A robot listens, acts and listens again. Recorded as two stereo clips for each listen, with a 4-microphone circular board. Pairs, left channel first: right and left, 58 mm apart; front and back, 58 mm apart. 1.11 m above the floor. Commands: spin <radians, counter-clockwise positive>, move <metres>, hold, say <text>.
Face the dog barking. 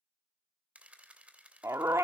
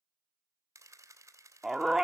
spin 1.66
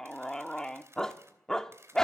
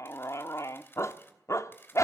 spin -0.17
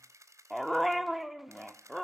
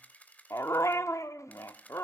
say Facing the dog barking, 1 to 2 m away.